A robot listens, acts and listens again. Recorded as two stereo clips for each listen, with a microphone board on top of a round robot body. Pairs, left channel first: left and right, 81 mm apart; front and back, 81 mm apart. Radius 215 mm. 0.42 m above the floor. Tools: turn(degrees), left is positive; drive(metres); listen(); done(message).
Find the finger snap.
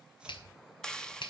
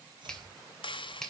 turn(degrees=80)
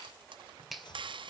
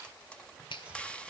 done("Facing the finger snap.")